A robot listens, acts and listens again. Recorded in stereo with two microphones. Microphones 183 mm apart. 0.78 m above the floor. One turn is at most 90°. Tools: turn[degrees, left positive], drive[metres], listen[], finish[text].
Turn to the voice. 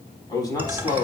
Thought: The man speaking: about 20° left or 160° left.
Action: turn[20]
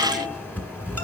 Action: listen[]
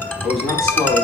Action: finish[Facing the man speaking, over 4 m away.]